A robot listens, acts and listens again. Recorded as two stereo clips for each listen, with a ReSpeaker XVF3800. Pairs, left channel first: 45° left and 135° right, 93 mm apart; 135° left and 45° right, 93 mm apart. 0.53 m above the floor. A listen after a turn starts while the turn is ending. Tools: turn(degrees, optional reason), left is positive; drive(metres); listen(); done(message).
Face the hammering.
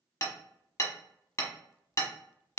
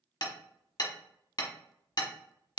turn(degrees=100, reason="The hammering: 100° left.")
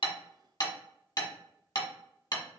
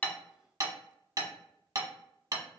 done("Facing the hammering.")